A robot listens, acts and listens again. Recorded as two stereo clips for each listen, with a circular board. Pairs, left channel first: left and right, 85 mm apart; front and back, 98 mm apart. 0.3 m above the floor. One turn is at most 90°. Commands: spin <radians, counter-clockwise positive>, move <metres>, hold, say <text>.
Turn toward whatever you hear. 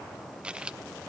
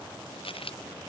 spin -0.17
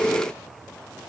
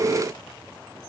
say I heard a dropped coin from this way, but can't make it out now.